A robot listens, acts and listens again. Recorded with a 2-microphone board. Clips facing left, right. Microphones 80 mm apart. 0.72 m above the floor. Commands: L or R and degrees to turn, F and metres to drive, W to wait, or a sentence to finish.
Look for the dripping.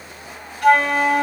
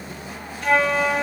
W
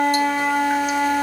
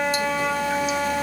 W
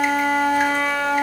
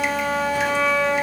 I can't make out dripping to turn to.